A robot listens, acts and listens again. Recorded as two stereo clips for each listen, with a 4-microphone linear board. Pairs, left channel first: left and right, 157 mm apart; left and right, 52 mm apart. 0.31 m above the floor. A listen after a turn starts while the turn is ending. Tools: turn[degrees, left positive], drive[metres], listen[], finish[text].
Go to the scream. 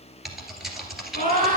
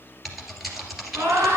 Thought: The scream: about 55° right or 125° right.
Action: turn[-55]
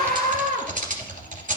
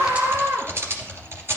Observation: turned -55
Thought: So it is at 65° right.
Action: turn[-65]
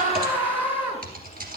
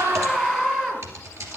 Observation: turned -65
Thought: The scream is now 15° right.
Action: turn[-15]
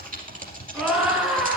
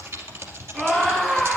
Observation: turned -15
Action: drive[1.0]
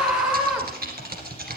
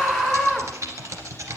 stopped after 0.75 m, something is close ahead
Action: finish[Blocked. The scream is further on, straight ahead.]